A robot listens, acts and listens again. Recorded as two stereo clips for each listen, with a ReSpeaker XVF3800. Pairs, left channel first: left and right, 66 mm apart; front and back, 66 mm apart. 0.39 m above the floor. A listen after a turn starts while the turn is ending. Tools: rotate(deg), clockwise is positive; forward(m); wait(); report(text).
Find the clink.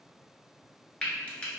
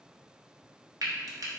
wait()
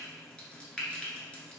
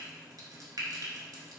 wait()
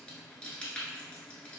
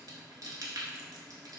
report("I can't make out a clink to turn to.")